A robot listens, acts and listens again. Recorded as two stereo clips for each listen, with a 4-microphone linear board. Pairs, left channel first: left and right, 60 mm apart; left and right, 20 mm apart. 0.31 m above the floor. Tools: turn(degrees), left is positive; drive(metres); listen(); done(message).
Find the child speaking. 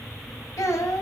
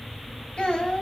turn(degrees=60)
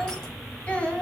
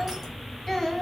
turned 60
turn(degrees=15)
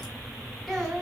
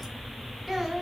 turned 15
done("Facing the child speaking.")